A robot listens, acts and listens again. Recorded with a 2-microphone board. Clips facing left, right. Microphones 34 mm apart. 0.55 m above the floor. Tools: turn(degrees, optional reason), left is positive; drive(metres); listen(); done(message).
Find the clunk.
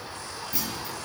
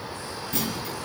turn(degrees=-55, reason="The clunk: about 55° right or 125° right.")
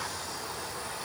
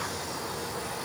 listen()
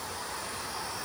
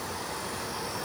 done("I heard a clunk, but can't make it out now. It was about straight ahead or 70° right.")